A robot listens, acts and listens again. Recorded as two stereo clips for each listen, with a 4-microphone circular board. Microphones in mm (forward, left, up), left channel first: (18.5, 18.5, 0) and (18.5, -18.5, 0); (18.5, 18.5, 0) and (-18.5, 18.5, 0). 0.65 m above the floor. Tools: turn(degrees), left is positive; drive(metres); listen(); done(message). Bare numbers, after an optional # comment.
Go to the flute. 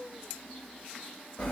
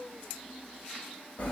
listen()
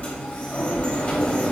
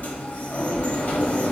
listen()
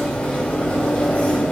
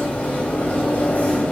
done("I can't make out a flute to turn to.")